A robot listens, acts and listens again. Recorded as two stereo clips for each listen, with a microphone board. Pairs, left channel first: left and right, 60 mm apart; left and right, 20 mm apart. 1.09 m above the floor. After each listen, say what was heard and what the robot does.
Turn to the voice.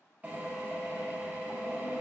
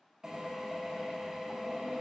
Keep listening.
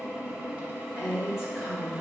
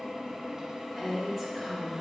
Turn 30° right.
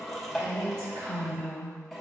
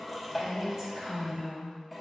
So it is at 150° right. Turn 150° right.
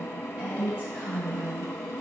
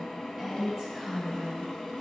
The woman speaking is now 20° right. Turn 20° right.
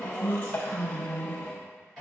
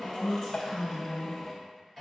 Facing the woman speaking, over 4 m away.